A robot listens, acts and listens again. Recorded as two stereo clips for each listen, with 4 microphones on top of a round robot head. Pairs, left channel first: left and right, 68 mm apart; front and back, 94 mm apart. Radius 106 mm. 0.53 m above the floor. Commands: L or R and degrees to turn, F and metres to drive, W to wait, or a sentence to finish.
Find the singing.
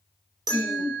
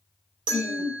R65
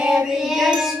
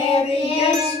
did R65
Facing the singing, 2 to 4 m away.